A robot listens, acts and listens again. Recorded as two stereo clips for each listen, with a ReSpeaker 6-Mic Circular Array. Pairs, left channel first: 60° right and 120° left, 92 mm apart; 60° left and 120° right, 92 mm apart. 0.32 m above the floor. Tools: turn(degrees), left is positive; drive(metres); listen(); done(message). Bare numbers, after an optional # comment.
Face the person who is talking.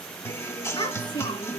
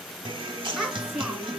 # The child speaking: 35° right.
turn(-35)
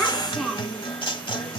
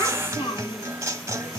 # The child speaking is now 35° left.
turn(35)
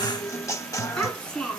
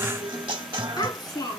# The child speaking is now 25° left.
turn(25)
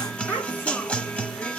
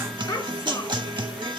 done("Found it: a child speaking, straight ahead, 2 to 4 m away.")